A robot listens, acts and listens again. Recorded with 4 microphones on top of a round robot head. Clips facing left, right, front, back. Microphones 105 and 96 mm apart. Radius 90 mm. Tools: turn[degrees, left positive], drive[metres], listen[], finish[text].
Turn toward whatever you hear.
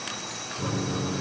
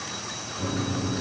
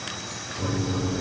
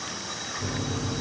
Thought: The microwave: 10° left.
Action: turn[10]
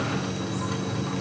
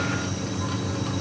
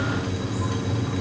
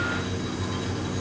Action: finish[Found it: a microwave, straight ahead.]